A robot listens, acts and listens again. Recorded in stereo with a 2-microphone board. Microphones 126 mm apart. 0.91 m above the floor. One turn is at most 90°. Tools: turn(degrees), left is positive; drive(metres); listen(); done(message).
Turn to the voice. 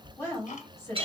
turn(degrees=20)
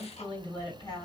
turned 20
turn(degrees=90)
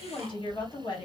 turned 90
turn(degrees=40)
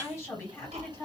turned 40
turn(degrees=20)
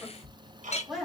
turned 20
done("Found it: a woman speaking, straight ahead.")